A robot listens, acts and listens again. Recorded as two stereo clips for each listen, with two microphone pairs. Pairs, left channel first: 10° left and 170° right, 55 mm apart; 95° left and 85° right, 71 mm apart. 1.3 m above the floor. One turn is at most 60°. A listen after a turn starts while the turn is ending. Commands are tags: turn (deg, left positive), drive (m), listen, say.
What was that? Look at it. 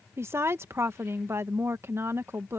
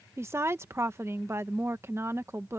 <turn deg="-60"/>
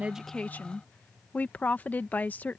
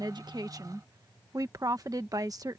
<turn deg="-50"/>
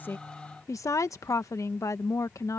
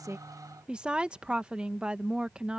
<say>Found it: a woman speaking, straight ahead.</say>